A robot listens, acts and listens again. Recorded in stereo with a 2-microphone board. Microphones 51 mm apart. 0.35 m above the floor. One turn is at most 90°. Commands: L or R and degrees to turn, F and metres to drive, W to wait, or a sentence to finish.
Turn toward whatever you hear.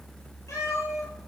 L70
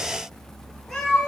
Facing the cat meowing, over 4 m away.